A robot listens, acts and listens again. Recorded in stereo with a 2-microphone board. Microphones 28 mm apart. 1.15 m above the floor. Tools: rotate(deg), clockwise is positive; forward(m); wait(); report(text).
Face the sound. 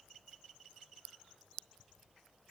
wait()
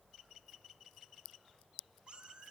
rotate(35)
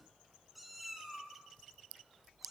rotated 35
report("Facing the cat meowing.")